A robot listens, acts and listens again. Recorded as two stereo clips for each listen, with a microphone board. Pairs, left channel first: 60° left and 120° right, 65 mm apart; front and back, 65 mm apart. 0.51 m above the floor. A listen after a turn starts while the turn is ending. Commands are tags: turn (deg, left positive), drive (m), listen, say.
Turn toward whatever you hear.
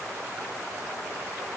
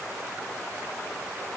<listen/>
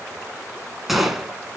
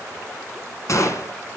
<turn deg="-35"/>
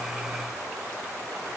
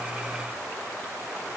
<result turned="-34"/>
<say>Facing where the gunshot came from. I can't hear it now.</say>